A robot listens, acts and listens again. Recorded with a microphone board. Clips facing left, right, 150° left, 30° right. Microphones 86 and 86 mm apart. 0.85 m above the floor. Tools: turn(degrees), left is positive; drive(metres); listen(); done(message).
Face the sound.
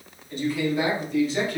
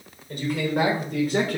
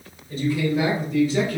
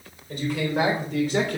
turn(degrees=-50)
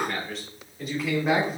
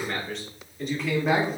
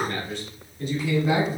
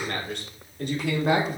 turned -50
done("Found it: a man speaking, straight ahead.")